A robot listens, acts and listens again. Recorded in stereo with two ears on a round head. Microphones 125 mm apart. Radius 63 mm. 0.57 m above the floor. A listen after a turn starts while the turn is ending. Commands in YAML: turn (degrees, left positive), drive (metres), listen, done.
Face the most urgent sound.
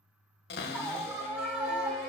turn: -30
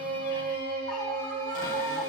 listen: true
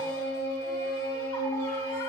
listen: true
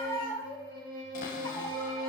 turn: 20
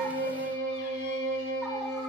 listen: true
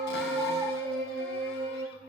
listen: true
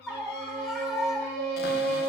done: "Found it: a scream, straight ahead, 1 to 2 m away."